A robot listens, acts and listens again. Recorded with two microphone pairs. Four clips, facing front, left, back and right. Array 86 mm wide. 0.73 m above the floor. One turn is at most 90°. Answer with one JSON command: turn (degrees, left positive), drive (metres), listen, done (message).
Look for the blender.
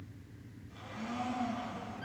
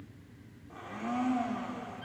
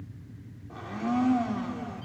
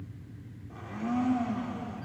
{"turn": 90}
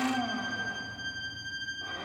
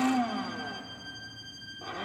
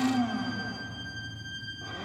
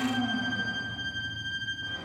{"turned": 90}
{"turn": 85}
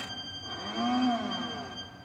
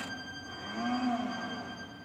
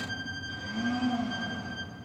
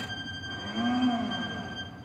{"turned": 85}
{"done": "Facing the blender, 2 to 4 m away."}